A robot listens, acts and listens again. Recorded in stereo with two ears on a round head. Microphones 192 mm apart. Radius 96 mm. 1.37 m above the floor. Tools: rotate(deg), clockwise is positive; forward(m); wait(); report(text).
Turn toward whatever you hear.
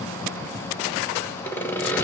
rotate(-30)
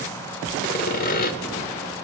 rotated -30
rotate(-140)
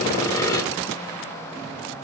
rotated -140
rotate(-15)
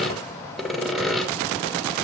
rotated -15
report("Facing the sawing, 1 to 2 m away.")